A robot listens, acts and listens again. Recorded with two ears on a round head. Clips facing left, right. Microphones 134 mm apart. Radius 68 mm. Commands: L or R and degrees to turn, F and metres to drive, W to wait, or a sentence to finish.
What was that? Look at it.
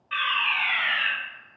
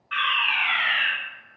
L20
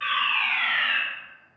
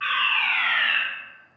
L140
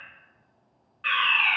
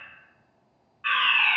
L50
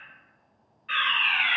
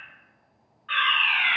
L20
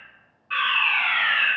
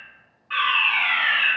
Found it: a fire alarm, straight ahead.